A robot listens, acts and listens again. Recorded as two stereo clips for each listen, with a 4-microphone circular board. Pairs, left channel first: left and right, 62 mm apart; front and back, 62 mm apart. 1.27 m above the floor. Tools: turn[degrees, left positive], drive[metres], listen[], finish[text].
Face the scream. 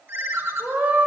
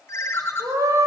Thought: The scream: 150° right.
Action: turn[-150]
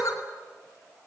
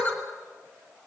Action: listen[]
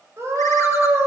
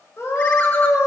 Thought: The scream is now 50° right.
Action: turn[-50]
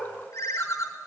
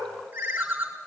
Action: listen[]
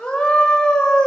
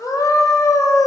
Thought: The scream is now 15° left.
Action: turn[15]
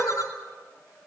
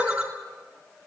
Action: listen[]
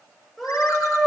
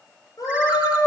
Action: finish[Facing the scream.]